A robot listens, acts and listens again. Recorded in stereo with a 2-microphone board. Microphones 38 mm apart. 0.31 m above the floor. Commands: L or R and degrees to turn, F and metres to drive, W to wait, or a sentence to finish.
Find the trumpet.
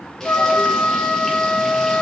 L60
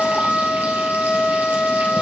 L35
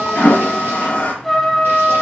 Facing the trumpet.